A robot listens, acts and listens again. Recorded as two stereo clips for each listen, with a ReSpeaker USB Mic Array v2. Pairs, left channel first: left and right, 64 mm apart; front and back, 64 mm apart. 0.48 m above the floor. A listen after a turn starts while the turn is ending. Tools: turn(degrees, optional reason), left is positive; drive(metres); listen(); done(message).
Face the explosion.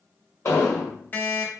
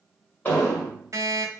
turn(degrees=60, reason="The explosion: 60° left.")
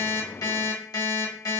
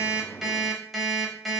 done("I heard an explosion from this way, but can't make it out now.")